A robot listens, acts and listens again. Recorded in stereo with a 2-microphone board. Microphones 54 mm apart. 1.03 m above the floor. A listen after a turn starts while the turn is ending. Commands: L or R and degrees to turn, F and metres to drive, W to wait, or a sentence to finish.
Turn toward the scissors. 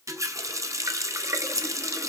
R70
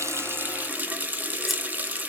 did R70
W
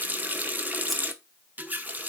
W
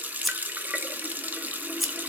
Found it: scissors, straight ahead.